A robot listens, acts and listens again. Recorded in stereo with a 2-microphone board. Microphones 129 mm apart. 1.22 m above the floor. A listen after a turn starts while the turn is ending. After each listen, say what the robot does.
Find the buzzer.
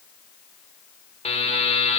Turn 50° left.
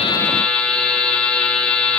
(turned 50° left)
Turn 10° left.
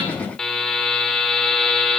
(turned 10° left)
Found it: a buzzer, straight ahead.